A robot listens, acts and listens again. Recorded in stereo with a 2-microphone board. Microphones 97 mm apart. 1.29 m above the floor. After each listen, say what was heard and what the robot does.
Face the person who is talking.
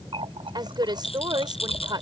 The woman speaking: about 45° right or 135° right. Turn 45° right.
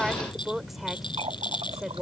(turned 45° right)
Facing the woman speaking.